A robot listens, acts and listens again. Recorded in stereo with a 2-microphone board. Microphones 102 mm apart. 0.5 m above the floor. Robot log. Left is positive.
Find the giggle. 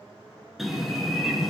cmd idle
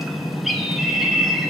cmd idle
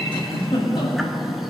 note: The giggle: about 55° left or 125° left.
cmd yaw +55
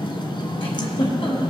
note: So it is at 65° left.
cmd yaw +65
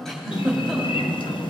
end: Found it: a giggle, straight ahead, 2 to 4 m away.